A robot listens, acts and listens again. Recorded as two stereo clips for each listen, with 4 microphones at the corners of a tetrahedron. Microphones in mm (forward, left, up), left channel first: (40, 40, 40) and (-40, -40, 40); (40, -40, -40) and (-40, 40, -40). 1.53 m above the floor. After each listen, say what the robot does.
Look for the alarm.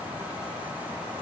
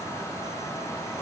Keep listening.
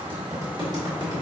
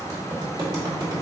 Keep listening.
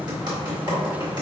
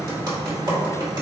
I can't make out an alarm to turn to.